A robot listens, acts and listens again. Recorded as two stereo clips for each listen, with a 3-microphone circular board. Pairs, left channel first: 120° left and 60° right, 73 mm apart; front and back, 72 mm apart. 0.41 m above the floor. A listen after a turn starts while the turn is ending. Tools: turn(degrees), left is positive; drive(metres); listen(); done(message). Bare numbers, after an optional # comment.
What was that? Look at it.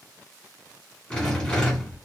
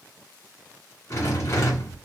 # The rattle: 40° left.
turn(40)
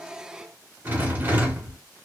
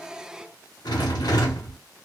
done("Facing the rattle, 1 to 2 m away.")